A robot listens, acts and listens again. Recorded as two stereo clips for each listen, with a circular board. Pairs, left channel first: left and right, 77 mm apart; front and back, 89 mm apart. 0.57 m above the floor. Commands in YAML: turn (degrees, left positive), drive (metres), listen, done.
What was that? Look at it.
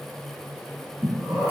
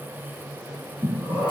turn: -160
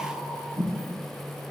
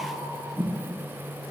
turn: 15
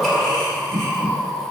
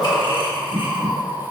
turn: 10
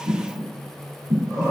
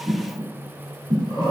done: "Facing the breathing, 1 to 2 m away."